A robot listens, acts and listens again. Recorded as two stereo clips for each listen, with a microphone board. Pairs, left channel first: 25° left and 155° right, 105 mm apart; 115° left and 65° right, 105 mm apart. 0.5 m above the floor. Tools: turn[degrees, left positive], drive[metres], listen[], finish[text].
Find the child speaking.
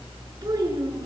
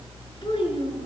Thought: The child speaking: 150° left.
Action: turn[150]
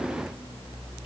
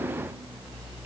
Action: listen[]
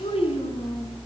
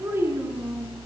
Action: finish[Found it: a child speaking, straight ahead.]